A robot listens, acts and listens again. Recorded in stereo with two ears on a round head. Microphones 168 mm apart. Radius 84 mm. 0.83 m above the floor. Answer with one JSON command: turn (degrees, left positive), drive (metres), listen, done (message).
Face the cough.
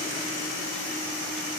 {"listen": true}
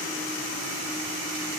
{"listen": true}
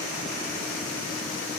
{"done": "I can't make out a cough."}